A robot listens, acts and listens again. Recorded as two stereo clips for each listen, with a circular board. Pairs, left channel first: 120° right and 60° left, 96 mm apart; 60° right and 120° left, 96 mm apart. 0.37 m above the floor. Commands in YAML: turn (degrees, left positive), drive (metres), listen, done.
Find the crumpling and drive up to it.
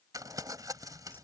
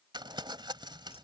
turn: 100
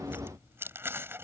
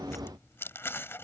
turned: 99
drive: 1.0
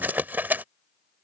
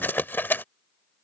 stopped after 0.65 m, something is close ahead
done: "I am next to the crumpling."